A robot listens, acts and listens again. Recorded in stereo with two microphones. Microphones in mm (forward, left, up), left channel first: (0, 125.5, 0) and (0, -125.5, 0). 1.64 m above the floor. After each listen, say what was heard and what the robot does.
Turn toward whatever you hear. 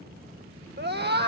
The scream: about 40° right or 140° right. Turn 40° right.
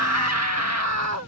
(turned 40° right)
So it is at 100° right. Turn 100° right.
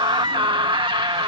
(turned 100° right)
The scream is now 20° right. Turn 20° right.
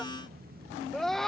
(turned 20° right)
Found it: a scream, straight ahead.